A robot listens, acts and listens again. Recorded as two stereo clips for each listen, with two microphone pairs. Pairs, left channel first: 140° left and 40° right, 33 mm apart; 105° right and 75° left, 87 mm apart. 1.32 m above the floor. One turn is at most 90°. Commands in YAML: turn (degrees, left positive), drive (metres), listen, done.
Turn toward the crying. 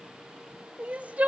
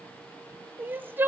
done: "Found it: crying, straight ahead."